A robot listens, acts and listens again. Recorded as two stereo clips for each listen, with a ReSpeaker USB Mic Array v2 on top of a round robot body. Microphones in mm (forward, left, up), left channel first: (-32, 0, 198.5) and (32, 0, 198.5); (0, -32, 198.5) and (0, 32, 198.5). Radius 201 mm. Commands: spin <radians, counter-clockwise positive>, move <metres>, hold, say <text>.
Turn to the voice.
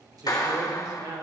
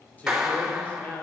spin -0.44
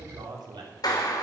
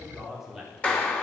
say Found it: a man speaking, straight ahead, 2 to 4 m away.